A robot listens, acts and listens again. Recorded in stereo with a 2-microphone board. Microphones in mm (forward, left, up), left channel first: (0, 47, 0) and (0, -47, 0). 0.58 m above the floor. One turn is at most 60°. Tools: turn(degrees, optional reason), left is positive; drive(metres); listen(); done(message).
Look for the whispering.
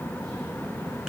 listen()
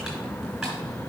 listen()
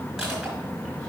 done("I can't make out whispering to turn to.")